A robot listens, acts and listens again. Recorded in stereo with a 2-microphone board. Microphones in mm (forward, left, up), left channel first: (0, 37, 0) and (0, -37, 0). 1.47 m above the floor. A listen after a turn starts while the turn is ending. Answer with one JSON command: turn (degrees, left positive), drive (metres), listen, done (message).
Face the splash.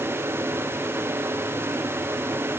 {"listen": true}
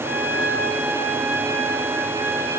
{"listen": true}
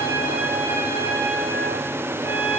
{"done": "I can't make out a splash to turn to."}